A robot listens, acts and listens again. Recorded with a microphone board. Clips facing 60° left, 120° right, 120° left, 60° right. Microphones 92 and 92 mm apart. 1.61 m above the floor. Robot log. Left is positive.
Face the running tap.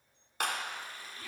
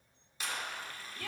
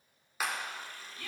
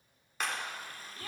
note: The running tap: 10° right.
cmd yaw -10
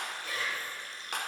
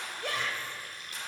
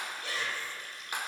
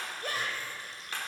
end: Facing the running tap.